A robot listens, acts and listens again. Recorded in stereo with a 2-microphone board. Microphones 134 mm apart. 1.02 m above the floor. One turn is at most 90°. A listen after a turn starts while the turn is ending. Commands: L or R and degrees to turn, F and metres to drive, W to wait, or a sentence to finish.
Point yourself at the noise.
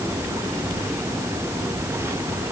W
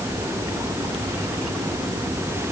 W
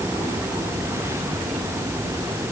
I can't make out anything.